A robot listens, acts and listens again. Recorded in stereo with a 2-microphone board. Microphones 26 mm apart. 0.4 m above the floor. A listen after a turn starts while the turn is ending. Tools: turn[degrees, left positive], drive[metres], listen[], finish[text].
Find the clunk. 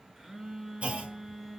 Thought: The clunk: about 70° right or 110° right.
Action: turn[-70]
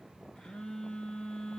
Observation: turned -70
Action: listen[]
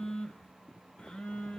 Action: finish[I heard a clunk, but can't make it out now. It was about straight ahead or 40° right.]